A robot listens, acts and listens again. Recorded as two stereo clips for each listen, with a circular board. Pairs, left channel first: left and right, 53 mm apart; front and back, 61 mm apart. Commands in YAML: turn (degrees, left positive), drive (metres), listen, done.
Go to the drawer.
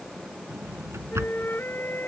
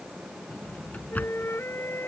turn: -65
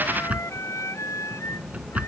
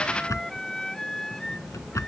turn: -30
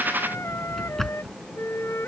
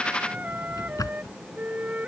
drive: 1.0
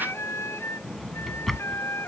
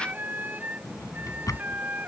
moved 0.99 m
drive: 1.0
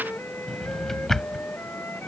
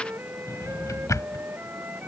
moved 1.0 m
turn: 10
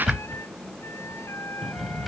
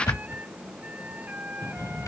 drive: 1.0
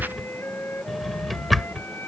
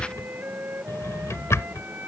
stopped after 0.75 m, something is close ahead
done: "Arrived at the drawer, straight ahead."